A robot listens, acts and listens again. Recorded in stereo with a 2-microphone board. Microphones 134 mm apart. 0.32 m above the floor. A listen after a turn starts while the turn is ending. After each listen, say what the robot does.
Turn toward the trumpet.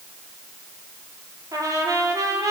Turn 25° right.
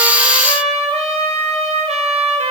Turn 130° right.
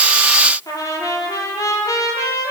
Turn 25° left.
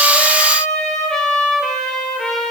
Facing the trumpet.